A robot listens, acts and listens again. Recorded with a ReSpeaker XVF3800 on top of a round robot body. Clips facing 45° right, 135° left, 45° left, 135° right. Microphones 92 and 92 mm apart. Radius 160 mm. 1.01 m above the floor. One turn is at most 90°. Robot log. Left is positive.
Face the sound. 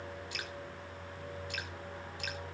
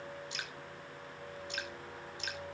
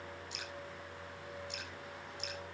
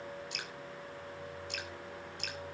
note: The dripping: 160° right.
cmd yaw -90
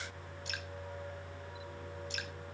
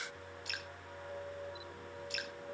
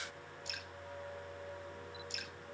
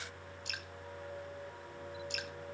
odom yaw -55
note: The dripping is now 105° right.
cmd yaw -90
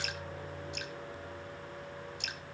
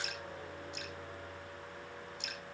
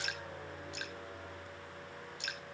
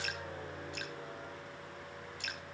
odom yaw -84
note: The dripping is now 20° right.
cmd yaw -20
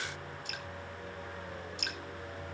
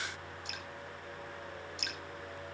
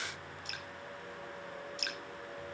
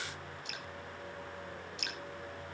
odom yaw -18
end: Found it: dripping, straight ahead, 2 to 4 m away.